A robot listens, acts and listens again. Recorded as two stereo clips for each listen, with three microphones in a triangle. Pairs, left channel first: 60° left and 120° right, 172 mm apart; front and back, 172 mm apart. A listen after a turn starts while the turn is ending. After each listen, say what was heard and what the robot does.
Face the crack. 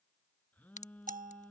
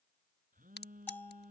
The crack: 15° left. Turn 15° left.
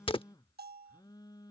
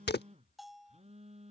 Found it: a crack, straight ahead.